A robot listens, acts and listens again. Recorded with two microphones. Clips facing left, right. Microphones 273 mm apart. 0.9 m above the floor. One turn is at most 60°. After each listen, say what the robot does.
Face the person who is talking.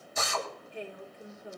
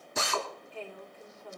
Turn 15° left.
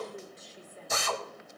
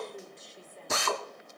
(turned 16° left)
Found it: a woman speaking, straight ahead.